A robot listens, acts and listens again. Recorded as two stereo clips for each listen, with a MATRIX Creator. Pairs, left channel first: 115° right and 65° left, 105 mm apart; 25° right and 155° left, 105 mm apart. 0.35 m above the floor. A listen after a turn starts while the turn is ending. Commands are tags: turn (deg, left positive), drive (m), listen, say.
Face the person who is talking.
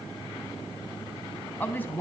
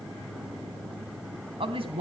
<turn deg="175"/>
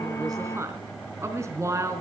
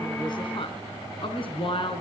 <say>Facing the woman speaking, over 4 m away.</say>